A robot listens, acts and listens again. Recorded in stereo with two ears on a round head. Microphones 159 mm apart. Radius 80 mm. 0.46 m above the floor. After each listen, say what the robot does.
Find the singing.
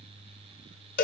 Keep listening.
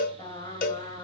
Turn 25° left.
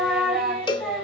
Found it: singing, straight ahead.